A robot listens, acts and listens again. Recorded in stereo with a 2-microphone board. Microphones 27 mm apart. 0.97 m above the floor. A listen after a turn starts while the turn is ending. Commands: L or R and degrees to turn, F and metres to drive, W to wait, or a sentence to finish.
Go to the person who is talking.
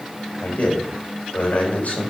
L60
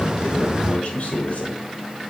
L60
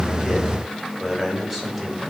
F1.0
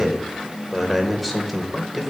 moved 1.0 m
F1.0
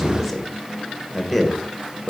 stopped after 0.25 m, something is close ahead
I am next to the man speaking.